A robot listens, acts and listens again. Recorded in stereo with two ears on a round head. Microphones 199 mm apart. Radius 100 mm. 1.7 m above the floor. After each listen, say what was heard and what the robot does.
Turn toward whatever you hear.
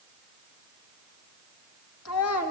Turn 90° left.
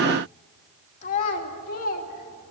So it is at 40° left. Turn 40° left.
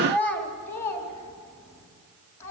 The child speaking is now 15° left. Turn 15° left.
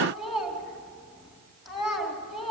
Found it: a child speaking, straight ahead, 2 to 4 m away.